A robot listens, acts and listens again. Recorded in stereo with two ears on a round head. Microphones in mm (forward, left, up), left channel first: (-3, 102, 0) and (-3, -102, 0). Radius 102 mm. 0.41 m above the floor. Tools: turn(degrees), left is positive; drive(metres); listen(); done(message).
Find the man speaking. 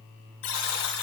listen()
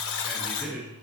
turn(degrees=-30)
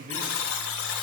turn(degrees=-150)
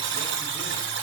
listen()
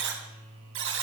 listen()
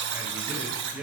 turn(degrees=-10)
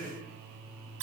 done("Facing the man speaking.")